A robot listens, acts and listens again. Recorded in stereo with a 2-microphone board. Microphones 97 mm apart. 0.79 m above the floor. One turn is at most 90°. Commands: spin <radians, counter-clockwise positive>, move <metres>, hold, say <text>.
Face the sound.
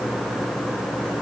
hold
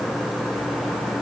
hold
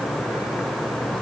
say I can't make out anything to turn to.